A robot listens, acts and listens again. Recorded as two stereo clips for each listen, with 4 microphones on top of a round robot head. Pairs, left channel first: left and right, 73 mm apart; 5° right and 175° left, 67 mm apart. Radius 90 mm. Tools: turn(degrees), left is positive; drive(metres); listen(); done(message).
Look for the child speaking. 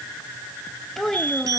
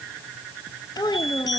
done("Found it: a child speaking, straight ahead.")